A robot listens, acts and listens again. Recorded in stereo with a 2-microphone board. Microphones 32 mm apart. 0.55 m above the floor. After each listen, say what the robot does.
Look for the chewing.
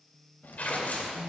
Turn 70° left.
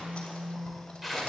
Keep listening.
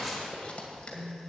Turn 35° left.
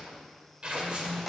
Keep listening.
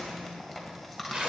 Found it: chewing, straight ahead.